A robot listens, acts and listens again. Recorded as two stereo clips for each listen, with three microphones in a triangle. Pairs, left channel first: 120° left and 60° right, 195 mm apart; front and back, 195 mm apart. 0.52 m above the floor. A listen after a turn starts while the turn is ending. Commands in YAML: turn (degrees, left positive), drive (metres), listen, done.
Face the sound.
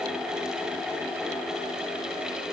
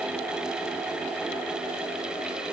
listen: true
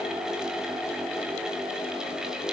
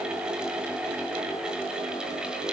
listen: true
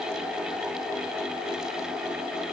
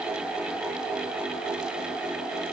done: "I can't make out anything."